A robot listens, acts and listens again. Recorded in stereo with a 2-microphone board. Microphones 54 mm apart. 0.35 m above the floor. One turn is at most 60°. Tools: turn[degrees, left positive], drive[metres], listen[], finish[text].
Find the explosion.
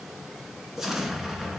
Action: turn[-30]
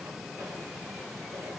Action: listen[]
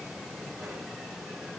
Action: finish[I heard an explosion, but can't make it out now. It was about 20° left or 140° right.]